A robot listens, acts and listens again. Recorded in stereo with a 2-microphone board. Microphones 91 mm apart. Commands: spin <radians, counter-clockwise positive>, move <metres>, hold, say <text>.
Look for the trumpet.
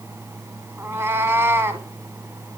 hold
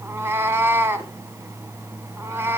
hold
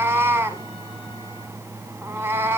say I can't make out a trumpet, only a cat meowing.